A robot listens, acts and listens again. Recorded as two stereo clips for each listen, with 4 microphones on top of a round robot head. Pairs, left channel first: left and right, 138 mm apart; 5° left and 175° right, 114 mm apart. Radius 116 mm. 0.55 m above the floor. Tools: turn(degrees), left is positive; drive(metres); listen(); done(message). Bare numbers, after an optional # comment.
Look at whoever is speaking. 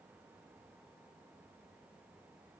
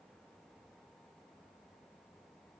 listen()
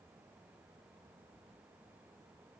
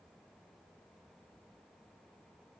listen()
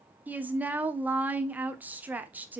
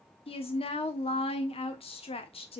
# The woman speaking: 15° right.
turn(-15)
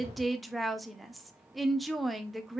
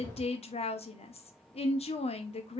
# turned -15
done("Found it: a woman speaking, straight ahead, 1 to 2 m away.")